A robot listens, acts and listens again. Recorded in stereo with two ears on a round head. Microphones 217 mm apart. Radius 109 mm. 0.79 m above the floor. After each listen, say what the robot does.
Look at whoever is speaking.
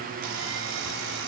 Keep listening.
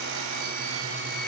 Keep listening.
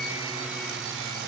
I can't make out anyone speaking to turn to.